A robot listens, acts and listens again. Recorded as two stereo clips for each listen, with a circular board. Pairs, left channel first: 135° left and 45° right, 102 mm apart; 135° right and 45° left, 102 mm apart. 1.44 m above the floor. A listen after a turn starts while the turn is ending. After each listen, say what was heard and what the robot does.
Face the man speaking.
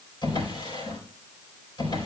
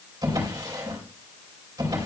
Keep listening.
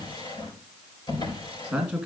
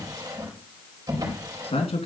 The man speaking: 135° right. Turn 135° right.
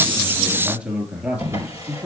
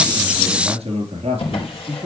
The man speaking is now 30° left. Turn 30° left.
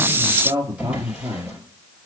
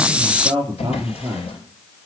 The man speaking is now 15° left. Turn 15° left.
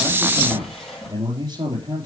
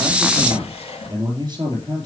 Facing the man speaking, 2 to 4 m away.